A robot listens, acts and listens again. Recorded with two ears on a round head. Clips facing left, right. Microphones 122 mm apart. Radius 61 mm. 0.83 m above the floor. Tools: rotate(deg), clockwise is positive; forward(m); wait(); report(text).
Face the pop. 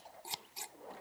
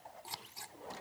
wait()
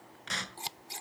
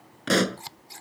rotate(70)
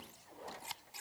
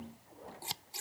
wait()
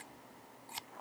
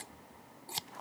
report("I heard a pop, but can't make it out now. It was about straight ahead or 40° right.")